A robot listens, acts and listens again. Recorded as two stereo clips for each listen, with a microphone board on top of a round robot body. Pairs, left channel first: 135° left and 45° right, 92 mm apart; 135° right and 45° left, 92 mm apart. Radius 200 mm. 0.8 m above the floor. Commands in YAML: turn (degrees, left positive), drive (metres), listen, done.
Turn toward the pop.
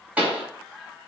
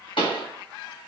turn: -120
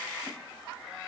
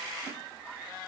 done: "Facing where the pop came from. I can't hear it now."